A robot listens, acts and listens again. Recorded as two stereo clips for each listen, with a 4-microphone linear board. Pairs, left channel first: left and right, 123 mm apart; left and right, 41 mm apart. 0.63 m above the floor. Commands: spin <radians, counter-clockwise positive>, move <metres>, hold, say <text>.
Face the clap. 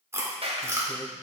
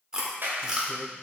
spin -1.05
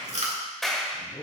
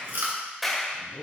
say Found it: a clap, straight ahead.